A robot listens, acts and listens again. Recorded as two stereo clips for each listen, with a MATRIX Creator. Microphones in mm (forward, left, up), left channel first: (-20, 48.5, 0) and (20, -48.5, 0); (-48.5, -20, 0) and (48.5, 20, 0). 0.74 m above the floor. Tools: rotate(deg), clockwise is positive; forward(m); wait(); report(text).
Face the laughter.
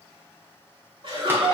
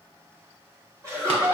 rotate(30)
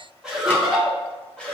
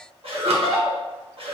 rotate(-35)
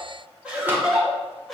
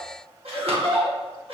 rotate(-25)
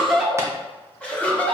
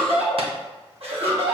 rotate(-40)
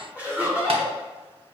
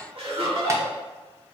report("Facing the laughter.")